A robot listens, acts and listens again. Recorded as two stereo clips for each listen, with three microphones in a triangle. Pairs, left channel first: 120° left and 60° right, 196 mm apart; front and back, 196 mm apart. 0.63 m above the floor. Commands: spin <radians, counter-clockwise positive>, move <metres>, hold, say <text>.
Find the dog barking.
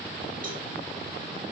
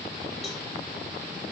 hold
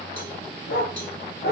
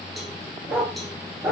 spin 1.66
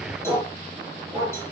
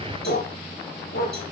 spin 0.17
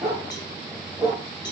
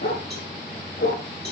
say Facing the dog barking.